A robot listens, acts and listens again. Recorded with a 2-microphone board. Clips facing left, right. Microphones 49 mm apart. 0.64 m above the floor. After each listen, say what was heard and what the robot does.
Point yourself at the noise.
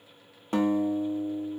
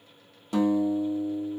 The guitar: about 35° left or 145° left. Turn 35° left.
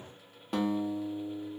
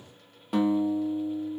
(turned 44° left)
Facing the guitar.